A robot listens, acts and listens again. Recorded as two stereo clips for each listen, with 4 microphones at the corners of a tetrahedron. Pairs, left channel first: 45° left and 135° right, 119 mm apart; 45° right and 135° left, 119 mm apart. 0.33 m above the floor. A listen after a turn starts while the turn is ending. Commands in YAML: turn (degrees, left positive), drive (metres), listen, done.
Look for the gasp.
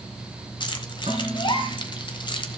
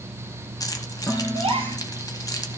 turn: 95
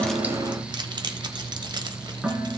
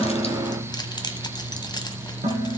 done: "I heard a gasp from this way, but can't make it out now."